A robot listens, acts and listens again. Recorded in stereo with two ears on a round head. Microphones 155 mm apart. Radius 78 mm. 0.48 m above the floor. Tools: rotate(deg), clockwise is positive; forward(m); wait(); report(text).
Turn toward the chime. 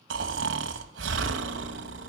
wait()
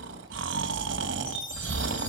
rotate(-30)
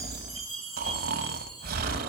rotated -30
report("Found it: a chime, straight ahead, over 4 m away.")